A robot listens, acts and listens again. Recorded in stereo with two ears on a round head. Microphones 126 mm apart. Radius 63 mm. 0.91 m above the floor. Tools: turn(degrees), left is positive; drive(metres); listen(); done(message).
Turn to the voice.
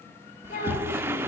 turn(degrees=70)
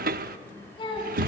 turn(degrees=35)
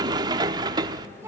turn(degrees=-20)
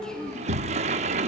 done("Found it: a child speaking, straight ahead, over 4 m away.")